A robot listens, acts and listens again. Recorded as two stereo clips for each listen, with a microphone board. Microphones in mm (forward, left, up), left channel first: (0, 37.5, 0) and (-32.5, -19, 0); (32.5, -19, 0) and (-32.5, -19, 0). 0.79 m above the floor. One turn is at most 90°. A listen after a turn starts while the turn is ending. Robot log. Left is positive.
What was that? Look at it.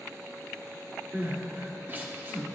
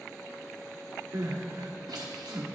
note: The crying: 175° right.
cmd yaw -90
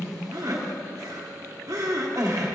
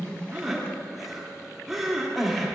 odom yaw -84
note: The crying is now 90° right.
cmd yaw -90
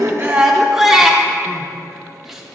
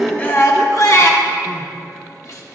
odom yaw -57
note: The crying is now 30° right.
cmd yaw -30
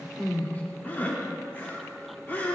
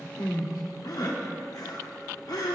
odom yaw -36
end: Found it: crying, straight ahead, 1 to 2 m away.